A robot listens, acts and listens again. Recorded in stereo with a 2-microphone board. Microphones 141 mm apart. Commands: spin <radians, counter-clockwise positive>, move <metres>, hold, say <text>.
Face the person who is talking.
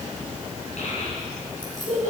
spin 1.05
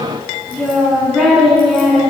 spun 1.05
say Found it: a child speaking, straight ahead, over 4 m away.